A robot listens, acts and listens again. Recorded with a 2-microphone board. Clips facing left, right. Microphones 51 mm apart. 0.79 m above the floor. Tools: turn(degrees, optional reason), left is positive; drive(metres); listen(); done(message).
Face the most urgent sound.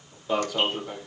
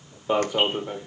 turn(degrees=-25, reason="The alarm: about 25° right or 155° right.")
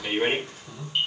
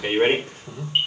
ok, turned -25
turn(degrees=-130, reason="So it is at 130° right.")
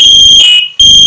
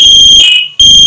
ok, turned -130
turn(degrees=-10, reason="The alarm is now 10° right.")
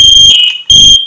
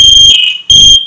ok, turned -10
done("Facing the alarm.")